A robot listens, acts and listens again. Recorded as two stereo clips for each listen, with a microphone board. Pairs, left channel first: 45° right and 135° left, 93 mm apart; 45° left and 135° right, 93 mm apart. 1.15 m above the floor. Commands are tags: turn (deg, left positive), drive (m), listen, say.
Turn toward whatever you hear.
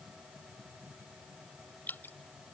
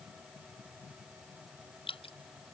<turn deg="25"/>
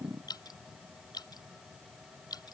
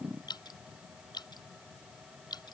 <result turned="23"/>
<say>Found it: dripping, straight ahead.</say>